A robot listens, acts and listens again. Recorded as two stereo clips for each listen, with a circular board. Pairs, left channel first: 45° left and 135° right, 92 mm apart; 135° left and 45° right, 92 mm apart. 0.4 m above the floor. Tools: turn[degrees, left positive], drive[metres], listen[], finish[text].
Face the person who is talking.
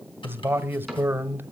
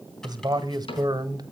Thought: The man speaking: 75° right.
Action: turn[-75]
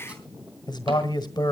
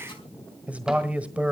Thought: The man speaking is now 25° left.
Action: turn[25]
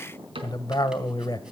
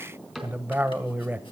Thought: The man speaking is now 20° left.
Action: turn[20]
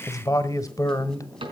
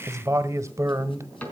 Action: finish[Facing the man speaking.]